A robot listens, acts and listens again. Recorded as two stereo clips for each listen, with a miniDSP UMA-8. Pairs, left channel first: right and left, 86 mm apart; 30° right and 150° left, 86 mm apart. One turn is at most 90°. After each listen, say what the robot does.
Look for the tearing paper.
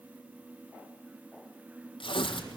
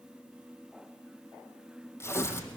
Turn 90° right.
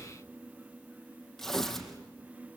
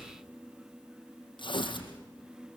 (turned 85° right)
Found it: tearing paper, straight ahead.